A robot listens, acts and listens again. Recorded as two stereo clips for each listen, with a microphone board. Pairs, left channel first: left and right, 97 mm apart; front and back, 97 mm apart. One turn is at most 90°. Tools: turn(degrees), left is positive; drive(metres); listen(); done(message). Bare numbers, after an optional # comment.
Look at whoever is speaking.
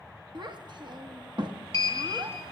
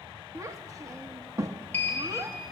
# The child speaking: 125° right.
turn(-90)
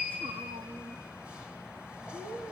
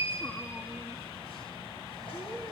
# The child speaking is now 60° right.
turn(-60)
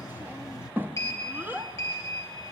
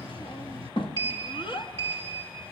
# The child speaking is now 20° right.
turn(-20)
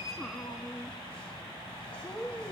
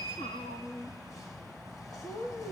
done("Facing the child speaking, under 1 m away.")